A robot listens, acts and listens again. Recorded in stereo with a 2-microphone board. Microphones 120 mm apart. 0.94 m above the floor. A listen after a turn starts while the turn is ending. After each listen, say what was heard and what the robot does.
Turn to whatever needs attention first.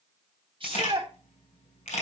The shout: about 45° right or 135° right. Turn 45° right.
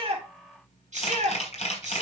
So it is at 85° right. Turn 85° right.
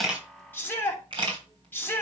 The shout is now 15° left. Turn 15° left.
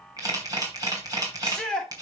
Found it: a shout, straight ahead.